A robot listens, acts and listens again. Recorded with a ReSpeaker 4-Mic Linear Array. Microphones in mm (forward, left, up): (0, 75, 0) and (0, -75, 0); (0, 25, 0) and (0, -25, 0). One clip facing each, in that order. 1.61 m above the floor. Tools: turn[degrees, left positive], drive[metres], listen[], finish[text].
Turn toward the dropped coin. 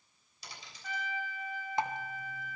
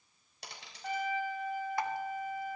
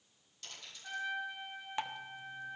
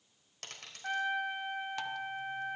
Thought: The dropped coin: about 70° right or 110° right.
Action: turn[-70]
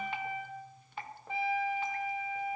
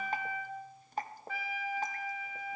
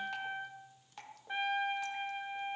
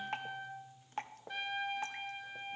Action: listen[]
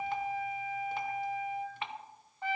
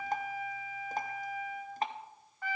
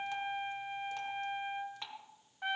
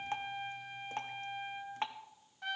Action: finish[I heard a dropped coin, but can't make it out now. It was about straight ahead or 40° right.]